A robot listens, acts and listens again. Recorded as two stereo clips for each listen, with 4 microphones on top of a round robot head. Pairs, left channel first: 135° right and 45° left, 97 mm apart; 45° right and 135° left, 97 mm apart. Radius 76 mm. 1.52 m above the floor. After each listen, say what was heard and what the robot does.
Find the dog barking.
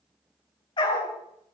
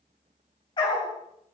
The dog barking: 95° right. Turn 95° right.
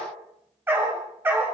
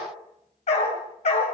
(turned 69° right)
The dog barking is now 25° right. Turn 25° right.
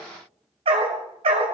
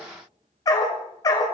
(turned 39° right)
The dog barking is now 10° left. Turn 10° left.
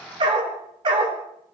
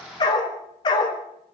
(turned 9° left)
Found it: a dog barking, straight ahead, 2 to 4 m away.